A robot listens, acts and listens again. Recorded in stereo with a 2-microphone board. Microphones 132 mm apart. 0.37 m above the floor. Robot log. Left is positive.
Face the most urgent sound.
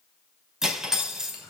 cmd idle
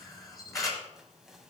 cmd idle
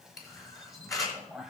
end: I can't make out anything urgent, only cutlery clinking and a camera shutter.